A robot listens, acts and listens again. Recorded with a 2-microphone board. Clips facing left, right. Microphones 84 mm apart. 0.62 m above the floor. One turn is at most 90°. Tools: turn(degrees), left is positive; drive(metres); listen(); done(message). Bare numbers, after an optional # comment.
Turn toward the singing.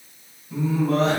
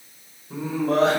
turn(-90)
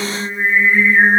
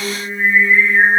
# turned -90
# So it is at 30° left.
turn(30)
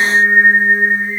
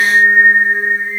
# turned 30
# The singing is now 25° left.
turn(25)
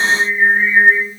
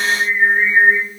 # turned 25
# The singing is now 10° left.
turn(10)
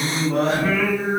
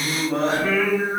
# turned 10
done("Found it: singing, straight ahead.")